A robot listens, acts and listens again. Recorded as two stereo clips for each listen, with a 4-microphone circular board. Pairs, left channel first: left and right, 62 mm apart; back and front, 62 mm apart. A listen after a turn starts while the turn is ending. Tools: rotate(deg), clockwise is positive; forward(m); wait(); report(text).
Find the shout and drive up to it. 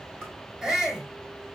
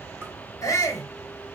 rotate(170)
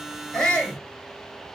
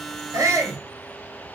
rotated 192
rotate(-25)
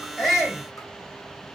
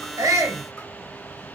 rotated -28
wait()
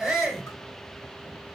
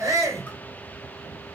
forward(1.0)
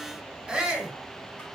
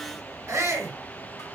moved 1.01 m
rotate(10)
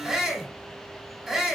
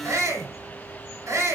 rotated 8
forward(1.0)
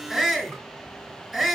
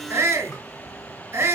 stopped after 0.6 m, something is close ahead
report("Arrived at the shout, straight ahead.")